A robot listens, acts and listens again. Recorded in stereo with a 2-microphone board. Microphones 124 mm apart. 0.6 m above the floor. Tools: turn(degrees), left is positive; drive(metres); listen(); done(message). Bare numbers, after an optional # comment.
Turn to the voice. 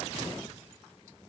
listen()
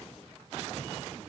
listen()
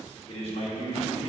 # The man speaking: about 50° left or 130° left.
turn(50)
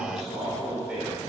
# So it is at 10° right.
turn(-10)
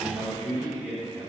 # The man speaking is now 10° right.
turn(-10)
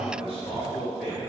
done("Facing the man speaking, 2 to 4 m away.")